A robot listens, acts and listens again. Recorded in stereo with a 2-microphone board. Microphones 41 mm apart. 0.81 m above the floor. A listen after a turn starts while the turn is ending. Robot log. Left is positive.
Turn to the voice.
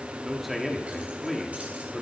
cmd yaw -30
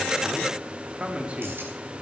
note: So it is at 140° right.
cmd yaw -140
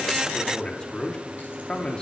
note: The man speaking is now 25° left.
cmd yaw +25
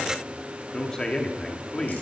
note: The man speaking is now 20° left.
cmd yaw +20
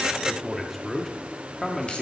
end: Found it: a man speaking, straight ahead, 1 to 2 m away.